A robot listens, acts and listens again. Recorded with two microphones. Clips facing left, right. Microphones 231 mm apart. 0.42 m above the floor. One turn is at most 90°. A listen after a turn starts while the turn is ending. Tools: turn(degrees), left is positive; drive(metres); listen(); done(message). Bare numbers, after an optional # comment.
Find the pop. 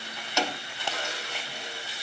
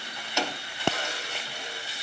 # The pop: about 70° right or 110° right.
turn(-70)
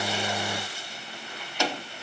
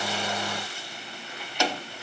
listen()
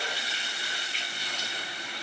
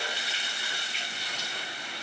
done("I heard a pop, but can't make it out now. It was about straight ahead or 40° right.")